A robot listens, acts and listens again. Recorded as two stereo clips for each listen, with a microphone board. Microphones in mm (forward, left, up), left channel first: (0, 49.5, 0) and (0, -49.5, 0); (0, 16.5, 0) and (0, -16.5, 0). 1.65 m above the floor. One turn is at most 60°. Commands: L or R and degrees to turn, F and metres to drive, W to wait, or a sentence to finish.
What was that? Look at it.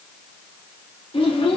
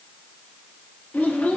L60
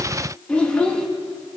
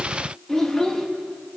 L15
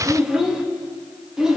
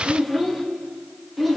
Found it: a child speaking, straight ahead, 1 to 2 m away.